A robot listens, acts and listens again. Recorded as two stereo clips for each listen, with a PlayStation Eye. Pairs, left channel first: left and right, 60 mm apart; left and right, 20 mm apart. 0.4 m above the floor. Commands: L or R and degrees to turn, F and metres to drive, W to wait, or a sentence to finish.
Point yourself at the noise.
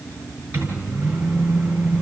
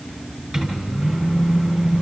R30
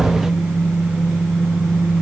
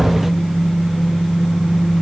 Facing the microwave, over 4 m away.